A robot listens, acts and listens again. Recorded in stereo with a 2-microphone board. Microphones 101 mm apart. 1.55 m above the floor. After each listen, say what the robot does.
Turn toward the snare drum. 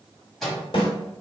Turn 60° left.
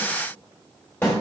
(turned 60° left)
Turn 25° left.
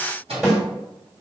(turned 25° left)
Found it: a snare drum, straight ahead, 1 to 2 m away.